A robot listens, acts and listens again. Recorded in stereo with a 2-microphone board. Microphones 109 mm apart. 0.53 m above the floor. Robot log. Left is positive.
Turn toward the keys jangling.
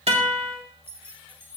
note: The keys jangling: about 15° right or 165° right.
cmd yaw -15
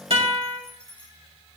note: So it is at 10° left.
cmd yaw +10
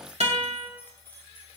note: The keys jangling is now 15° left.
cmd yaw +15
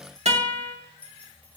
note: The keys jangling is now 15° left.
cmd yaw +15
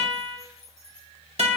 end: Facing the keys jangling.